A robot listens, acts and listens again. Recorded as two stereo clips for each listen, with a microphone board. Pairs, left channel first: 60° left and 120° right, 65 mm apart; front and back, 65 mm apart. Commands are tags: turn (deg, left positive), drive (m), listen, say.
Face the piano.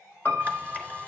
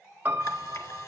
<turn deg="115"/>
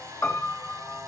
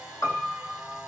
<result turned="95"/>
<turn deg="20"/>
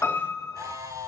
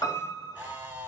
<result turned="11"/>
<turn deg="10"/>
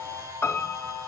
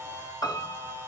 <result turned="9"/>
<say>Found it: a piano, straight ahead.</say>